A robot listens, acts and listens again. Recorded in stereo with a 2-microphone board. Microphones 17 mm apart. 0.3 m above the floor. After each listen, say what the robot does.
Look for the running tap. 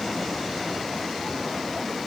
Keep listening.
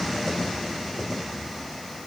Keep listening.
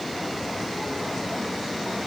I can't make out a running tap to turn to.